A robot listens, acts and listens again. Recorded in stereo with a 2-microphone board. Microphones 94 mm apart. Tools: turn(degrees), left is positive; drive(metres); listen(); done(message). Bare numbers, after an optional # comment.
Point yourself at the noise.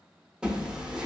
turn(-30)
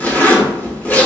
# So it is at 20° left.
turn(20)
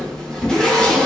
# The zipper is now 10° left.
turn(10)
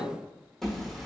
done("Facing the zipper, under 1 m away.")